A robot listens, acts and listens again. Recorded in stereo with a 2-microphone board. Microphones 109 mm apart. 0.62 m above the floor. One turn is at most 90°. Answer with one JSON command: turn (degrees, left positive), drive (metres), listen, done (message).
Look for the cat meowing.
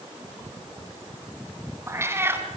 {"turn": -20}
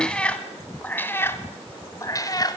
{"turn": 35}
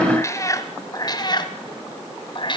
{"turn": 45}
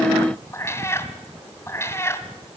{"turn": 20}
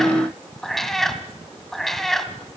{"done": "Facing the cat meowing."}